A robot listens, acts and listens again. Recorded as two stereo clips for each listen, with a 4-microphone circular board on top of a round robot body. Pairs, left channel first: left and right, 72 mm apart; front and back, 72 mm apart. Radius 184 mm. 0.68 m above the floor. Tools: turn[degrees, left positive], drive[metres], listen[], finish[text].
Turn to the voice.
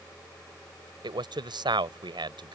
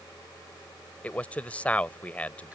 Thought: The man speaking: 75° right.
Action: turn[-75]
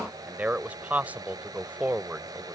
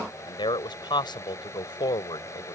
Thought: The man speaking is now 20° right.
Action: turn[-20]
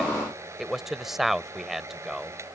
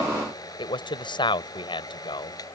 Action: finish[Found it: a man speaking, straight ahead.]